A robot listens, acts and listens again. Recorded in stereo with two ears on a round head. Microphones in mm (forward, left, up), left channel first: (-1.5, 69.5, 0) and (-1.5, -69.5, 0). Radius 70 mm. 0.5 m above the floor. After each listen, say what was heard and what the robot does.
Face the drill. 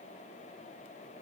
Keep listening.
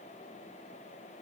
Keep listening.
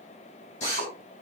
The drill: about 50° left or 130° left. Turn 50° left.
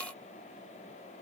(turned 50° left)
Keep listening.
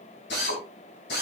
So it is at 85° left. Turn 85° left.
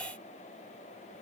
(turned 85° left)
Keep listening.
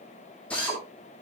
The drill is now 10° left. Turn 10° left.
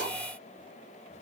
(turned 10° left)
Keep listening.
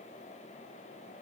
Keep listening.
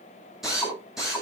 Found it: a drill, straight ahead.